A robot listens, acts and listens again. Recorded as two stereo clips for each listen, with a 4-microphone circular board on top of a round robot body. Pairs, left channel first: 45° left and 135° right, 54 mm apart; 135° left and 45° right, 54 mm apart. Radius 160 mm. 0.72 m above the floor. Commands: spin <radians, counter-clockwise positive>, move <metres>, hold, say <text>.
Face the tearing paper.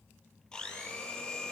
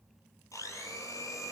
hold
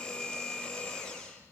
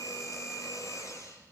hold
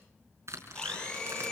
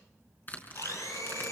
spin -2.88
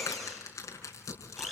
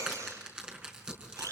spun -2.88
spin 0.52
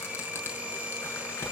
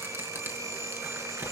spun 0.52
hold
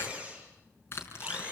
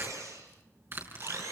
say Facing the tearing paper, over 4 m away.